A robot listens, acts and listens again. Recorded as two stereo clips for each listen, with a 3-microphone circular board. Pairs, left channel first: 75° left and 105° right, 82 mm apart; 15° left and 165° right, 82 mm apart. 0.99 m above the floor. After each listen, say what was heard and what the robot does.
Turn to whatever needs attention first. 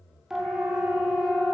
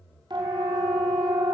The siren: 175° left. Turn 175° left.
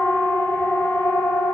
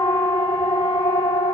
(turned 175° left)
The siren is now 15° left. Turn 15° left.
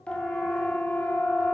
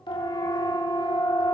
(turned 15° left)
Facing the siren.